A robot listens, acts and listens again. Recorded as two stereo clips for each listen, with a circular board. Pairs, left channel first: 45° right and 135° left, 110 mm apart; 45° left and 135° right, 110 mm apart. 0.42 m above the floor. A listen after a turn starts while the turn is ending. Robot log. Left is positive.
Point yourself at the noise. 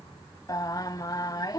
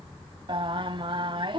note: The singing: 100° right.
cmd yaw -100
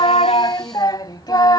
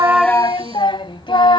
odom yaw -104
end: Facing the singing.